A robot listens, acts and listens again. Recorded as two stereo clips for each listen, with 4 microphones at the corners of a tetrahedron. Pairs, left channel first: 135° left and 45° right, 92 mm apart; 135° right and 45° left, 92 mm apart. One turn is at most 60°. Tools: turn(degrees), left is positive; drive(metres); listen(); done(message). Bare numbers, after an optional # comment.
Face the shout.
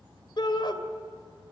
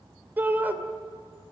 # The shout: 115° left.
turn(60)
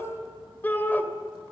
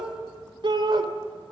# The shout is now 65° left.
turn(60)
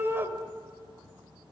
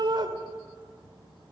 # The shout is now 20° left.
turn(20)
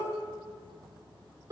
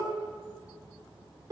done("Found it: a shout, straight ahead, 2 to 4 m away.")